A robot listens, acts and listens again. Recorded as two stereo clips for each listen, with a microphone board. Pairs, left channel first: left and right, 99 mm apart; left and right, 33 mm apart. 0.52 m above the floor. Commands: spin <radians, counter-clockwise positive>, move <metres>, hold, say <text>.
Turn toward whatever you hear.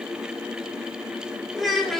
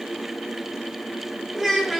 spin 0.52
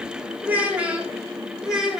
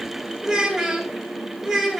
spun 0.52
spin -0.52
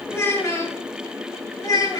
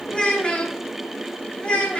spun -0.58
spin 0.70
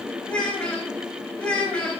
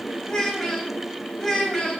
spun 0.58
spin 0.17
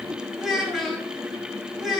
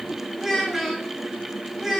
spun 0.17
say Facing the child speaking, 2 to 4 m away.